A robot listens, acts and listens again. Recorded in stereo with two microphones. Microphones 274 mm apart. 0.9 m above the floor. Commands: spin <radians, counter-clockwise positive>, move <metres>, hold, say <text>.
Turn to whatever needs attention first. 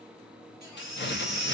spin -1.57
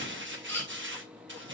say Found it: a baby crying, straight ahead.